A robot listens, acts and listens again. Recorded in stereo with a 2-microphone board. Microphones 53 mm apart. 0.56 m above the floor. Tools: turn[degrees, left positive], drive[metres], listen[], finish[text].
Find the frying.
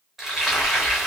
Action: turn[-30]
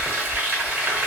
Thought: So it is at 145° right.
Action: turn[-145]
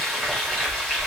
Action: finish[Found it: frying, straight ahead.]